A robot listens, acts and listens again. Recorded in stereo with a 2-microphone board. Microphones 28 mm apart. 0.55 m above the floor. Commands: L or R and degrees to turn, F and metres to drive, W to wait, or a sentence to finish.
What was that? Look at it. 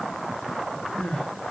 L60
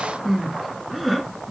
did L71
Found it: crying, straight ahead, 1 to 2 m away.